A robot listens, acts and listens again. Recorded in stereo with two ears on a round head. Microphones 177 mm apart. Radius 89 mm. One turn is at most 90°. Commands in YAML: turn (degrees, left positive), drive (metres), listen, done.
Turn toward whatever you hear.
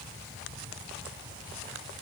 listen: true
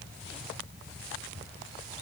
listen: true
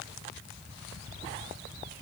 done: "I can't make out anything to turn to."